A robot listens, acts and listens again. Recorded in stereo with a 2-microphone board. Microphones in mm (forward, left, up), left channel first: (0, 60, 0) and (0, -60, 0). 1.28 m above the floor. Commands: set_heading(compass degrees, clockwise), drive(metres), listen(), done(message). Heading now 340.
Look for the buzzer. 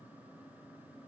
listen()
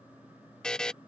set_heading(310)
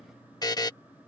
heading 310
set_heading(170)
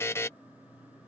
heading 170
set_heading(145)
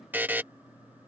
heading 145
set_heading(165)
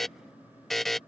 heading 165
done("Facing the buzzer.")